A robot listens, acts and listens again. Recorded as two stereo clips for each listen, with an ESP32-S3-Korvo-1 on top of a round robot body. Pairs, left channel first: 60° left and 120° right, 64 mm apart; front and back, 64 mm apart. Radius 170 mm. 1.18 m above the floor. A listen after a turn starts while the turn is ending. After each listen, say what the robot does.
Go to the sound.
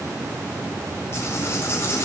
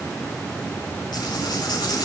Turn 10° left.
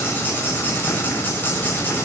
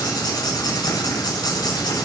Drive 1.0 m forward.
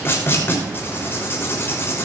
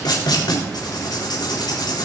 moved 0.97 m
Drive 1.0 m forward.
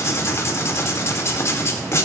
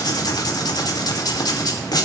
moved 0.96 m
Turn 15° left.
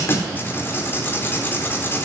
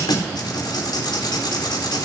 Drive 1.0 m forward.
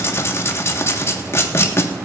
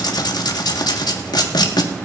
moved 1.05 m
Turn 10° left.
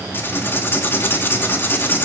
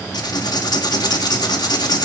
Drive 1.0 m forward.
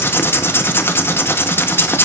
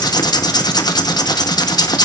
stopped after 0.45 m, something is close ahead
I am next to the writing.